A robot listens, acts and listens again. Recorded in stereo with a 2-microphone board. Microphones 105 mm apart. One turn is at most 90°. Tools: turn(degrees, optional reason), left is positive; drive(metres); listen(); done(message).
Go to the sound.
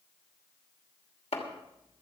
turn(degrees=90)
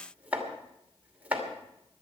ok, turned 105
turn(degrees=-15, reason="So it is at 15° right.")
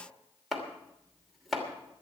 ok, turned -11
drive(metres=1.0)
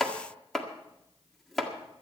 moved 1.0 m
drive(metres=1.0)
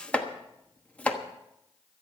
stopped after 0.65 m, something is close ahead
turn(degrees=15, reason="The chopping is now 15° left.")
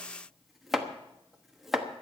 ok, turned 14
done("Arrived at the chopping, straight ahead.")